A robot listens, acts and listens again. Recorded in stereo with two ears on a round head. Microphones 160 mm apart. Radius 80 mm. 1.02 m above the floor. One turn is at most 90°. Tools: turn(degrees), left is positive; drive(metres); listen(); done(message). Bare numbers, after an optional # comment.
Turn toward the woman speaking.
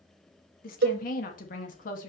# The woman speaking: about 50° left or 130° left.
turn(50)
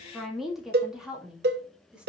done("Found it: a woman speaking, straight ahead, 2 to 4 m away.")